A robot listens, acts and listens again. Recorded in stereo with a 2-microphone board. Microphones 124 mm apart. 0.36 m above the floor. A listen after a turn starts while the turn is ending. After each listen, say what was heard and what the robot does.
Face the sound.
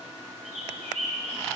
The bird: about 70° right or 110° right. Turn 70° right.
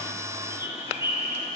So it is at 20° right. Turn 20° right.
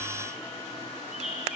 Found it: a bird, straight ahead.